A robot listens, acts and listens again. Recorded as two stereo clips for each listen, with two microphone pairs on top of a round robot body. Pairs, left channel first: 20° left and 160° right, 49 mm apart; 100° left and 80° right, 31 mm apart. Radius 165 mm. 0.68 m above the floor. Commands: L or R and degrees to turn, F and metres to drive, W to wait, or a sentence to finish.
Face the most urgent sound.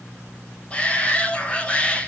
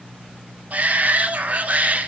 R50
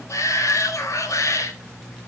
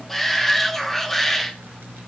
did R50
L10
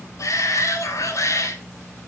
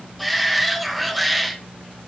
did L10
Facing the shout, 2 to 4 m away.